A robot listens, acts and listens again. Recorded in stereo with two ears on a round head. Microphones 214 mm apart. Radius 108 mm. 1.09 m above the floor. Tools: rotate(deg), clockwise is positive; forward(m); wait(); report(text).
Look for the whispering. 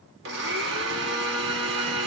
wait()
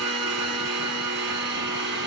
wait()
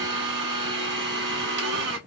report("I can't make out whispering, only a blender.")